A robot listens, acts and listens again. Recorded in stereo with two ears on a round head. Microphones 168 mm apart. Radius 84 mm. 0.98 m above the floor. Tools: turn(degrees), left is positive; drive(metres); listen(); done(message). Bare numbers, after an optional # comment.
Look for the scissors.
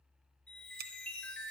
# The scissors: about 55° right or 125° right.
turn(-55)
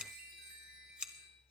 done("Facing the scissors, 1 to 2 m away.")